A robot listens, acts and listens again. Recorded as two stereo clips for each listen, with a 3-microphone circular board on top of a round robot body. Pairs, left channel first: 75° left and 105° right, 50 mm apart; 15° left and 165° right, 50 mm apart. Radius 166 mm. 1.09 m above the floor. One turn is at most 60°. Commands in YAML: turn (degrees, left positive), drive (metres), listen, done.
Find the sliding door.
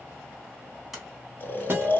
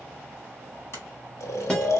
turn: -25
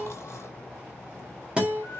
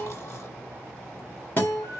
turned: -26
listen: true
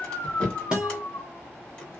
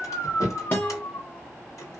done: "Found it: a sliding door, straight ahead."